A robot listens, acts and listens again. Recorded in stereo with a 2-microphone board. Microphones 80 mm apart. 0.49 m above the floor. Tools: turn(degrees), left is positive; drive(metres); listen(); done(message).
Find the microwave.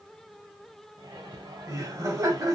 turn(degrees=-90)
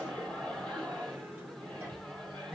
done("Facing the microwave.")